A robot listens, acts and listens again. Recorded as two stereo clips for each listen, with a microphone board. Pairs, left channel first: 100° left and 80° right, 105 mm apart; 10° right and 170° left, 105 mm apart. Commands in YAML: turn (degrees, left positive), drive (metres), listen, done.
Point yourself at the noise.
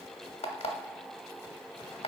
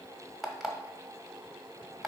turn: 80
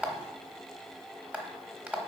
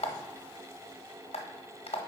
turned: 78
done: "Found it: an alarm clock, straight ahead, under 1 m away."